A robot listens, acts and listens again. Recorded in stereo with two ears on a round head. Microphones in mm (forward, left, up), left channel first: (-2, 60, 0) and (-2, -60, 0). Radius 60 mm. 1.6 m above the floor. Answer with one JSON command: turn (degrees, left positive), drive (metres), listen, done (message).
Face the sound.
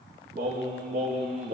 {"turn": -60}
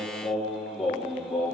{"done": "Facing the singing."}